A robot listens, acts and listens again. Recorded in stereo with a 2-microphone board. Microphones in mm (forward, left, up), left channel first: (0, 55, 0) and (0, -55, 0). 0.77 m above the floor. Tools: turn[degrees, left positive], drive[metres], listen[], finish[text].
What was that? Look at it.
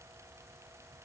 Action: listen[]
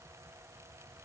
Action: listen[]
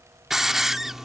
Action: turn[-30]
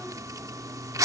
Thought: So it is at 150° right.
Action: turn[-150]
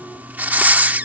Thought: The hiss is now 15° right.
Action: turn[-15]
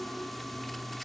Action: listen[]
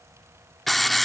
Action: finish[Found it: a hiss, straight ahead.]